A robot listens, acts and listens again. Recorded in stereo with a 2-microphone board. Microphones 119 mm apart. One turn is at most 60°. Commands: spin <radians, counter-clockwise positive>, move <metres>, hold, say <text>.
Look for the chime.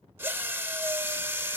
hold
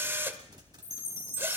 spin 1.05
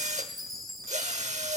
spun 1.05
say Facing the chime, 2 to 4 m away.